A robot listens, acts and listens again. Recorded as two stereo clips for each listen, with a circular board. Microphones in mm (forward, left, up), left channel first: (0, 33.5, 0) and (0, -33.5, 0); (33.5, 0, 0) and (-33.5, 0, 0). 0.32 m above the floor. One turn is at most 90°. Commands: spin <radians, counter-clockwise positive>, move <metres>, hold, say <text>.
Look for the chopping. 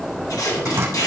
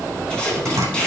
spin -1.57
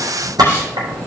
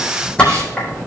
spin -1.31
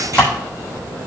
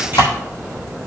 spin 0.35
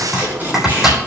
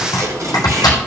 say Facing the chopping, 2 to 4 m away.